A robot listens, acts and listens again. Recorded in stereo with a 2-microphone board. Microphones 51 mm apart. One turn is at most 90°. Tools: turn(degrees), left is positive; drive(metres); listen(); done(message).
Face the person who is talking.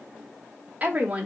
turn(degrees=-25)
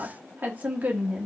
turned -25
turn(degrees=-25)
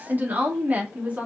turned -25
turn(degrees=-30)
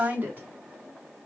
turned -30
turn(degrees=-90)
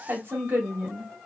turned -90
turn(degrees=-40)
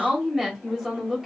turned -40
done("Found it: a woman speaking, straight ahead.")